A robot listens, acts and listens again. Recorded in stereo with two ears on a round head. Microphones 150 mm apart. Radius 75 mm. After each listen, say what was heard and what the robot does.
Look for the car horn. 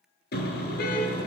The car horn: about 65° left or 115° left. Turn 65° left.
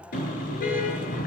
So it is at 50° left. Turn 50° left.
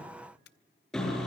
Facing the car horn, over 4 m away.